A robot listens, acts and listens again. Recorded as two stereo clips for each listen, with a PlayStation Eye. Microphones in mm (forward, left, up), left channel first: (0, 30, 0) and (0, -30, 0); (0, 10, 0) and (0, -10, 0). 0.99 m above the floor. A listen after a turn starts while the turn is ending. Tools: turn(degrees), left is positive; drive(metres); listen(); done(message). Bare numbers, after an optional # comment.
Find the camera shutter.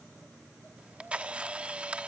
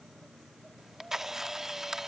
# The camera shutter: about 20° right or 160° right.
turn(-20)
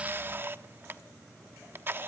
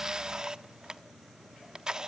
# So it is at 140° right.
turn(-140)
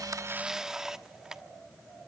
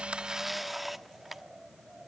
# The camera shutter is now 10° right.
turn(-10)
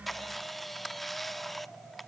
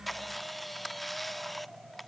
done("Facing the camera shutter, 1 to 2 m away.")